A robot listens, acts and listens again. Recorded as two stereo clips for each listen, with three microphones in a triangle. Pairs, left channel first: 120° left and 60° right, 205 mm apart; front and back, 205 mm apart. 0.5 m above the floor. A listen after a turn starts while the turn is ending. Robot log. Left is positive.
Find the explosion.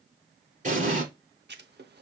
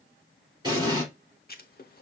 note: The explosion: 110° right.
cmd yaw -110
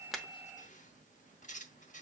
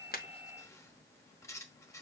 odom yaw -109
end: Facing where the explosion came from. I can't hear it now.